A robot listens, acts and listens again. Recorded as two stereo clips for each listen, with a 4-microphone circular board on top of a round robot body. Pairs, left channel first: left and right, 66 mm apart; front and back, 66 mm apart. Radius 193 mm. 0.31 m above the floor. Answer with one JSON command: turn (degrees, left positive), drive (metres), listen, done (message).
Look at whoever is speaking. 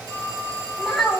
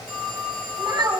{"turn": 180}
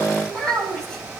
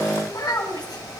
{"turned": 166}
{"turn": 15}
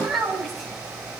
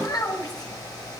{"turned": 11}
{"done": "Facing the child speaking."}